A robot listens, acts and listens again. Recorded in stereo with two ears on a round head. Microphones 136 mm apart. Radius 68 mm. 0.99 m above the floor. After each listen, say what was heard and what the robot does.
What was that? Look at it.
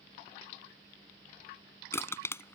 The crushing: about 15° left or 165° left. Turn 15° left.
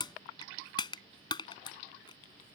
So it is at 150° left. Turn 150° left.
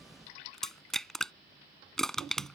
Found it: crushing, straight ahead.